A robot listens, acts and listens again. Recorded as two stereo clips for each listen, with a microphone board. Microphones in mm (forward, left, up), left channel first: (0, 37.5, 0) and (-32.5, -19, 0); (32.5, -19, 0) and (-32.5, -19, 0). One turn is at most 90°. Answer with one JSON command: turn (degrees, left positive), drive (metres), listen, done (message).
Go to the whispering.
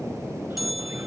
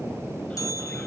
{"listen": true}
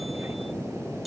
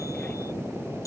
{"listen": true}
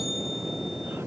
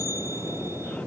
{"done": "I can't make out whispering, only a bell."}